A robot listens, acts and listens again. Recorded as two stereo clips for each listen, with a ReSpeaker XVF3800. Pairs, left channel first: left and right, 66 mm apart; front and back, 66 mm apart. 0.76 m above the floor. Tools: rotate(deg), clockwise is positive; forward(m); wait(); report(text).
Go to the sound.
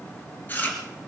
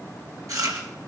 rotate(-150)
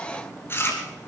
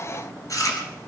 rotate(-30)
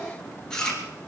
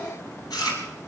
rotate(-10)
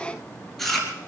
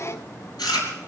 forward(1.0)
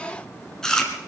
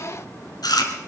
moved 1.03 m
rotate(-10)
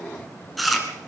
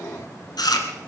forward(1.0)
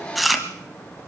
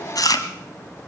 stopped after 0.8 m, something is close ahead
report("I am next to the chewing.")